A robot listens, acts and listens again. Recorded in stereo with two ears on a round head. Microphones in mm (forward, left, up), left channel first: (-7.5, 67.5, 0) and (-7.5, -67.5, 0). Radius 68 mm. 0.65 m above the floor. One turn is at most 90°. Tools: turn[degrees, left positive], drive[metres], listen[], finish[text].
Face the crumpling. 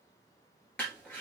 Action: turn[30]
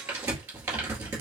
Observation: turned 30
Thought: So it is at 15° right.
Action: turn[-15]
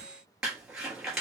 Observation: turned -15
Action: finish[Found it: crumpling, straight ahead, 2 to 4 m away.]